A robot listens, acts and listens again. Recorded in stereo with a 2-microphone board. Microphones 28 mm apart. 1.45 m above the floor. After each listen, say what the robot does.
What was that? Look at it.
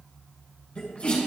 Turn 60° left.
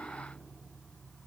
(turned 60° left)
Keep listening.
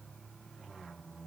I heard a sneeze, but can't make it out now. It was about straight ahead or 60° left.